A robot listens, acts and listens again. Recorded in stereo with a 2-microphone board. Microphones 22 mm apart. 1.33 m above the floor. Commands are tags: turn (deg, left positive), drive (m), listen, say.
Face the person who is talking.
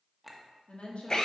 <turn deg="70"/>
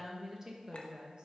<turn deg="-40"/>
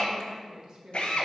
<turn deg="-35"/>
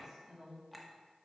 <turn deg="-25"/>
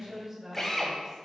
<turn deg="-15"/>
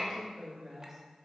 <say>Facing the woman speaking.</say>